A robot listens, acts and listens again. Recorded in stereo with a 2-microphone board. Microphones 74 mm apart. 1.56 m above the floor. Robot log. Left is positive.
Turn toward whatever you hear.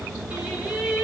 cmd yaw -30
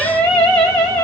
note: So it is at 15° left.
cmd yaw +15
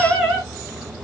end: Facing the singing, 2 to 4 m away.